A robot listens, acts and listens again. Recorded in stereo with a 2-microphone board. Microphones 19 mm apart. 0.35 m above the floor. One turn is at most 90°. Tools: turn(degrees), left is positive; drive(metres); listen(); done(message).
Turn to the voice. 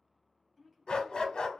turn(degrees=-30)
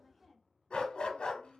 turn(degrees=15)
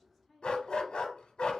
done("Facing the woman speaking, 2 to 4 m away.")